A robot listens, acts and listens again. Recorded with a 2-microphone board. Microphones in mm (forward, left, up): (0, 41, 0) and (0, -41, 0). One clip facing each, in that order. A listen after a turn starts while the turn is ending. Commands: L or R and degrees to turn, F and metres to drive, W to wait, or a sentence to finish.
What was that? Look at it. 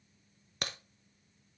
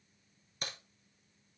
L90
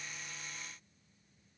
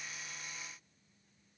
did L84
Facing where the crack came from. I can't hear it now.